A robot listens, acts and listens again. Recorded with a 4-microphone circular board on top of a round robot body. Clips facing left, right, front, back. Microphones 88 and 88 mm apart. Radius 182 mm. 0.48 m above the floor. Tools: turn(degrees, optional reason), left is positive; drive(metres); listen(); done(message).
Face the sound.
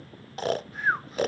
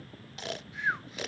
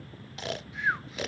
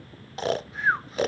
turn(degrees=135, reason="The snoring: 135° left.")
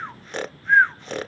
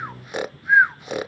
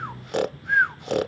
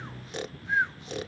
turn(degrees=-10, reason="The snoring is now 10° right.")
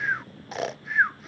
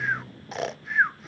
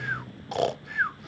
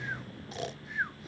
done("Facing the snoring.")